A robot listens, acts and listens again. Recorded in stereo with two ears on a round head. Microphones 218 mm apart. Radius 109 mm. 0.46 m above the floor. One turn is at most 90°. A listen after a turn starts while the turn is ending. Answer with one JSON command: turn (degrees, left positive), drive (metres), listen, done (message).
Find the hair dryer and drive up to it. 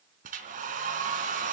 {"turn": -35}
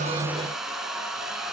{"drive": 1.0}
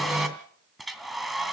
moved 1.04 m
{"drive": 1.0}
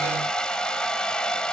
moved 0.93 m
{"drive": 1.0}
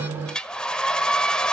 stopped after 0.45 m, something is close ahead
{"done": "Arrived at the hair dryer, straight ahead."}